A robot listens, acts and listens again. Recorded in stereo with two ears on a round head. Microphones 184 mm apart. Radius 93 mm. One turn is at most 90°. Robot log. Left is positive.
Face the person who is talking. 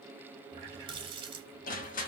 cmd idle
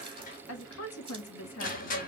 note: The woman speaking: about 65° left or 115° left.
cmd yaw +65
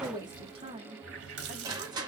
note: So it is at 25° right.
cmd yaw -25
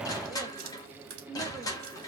end: Facing the woman speaking.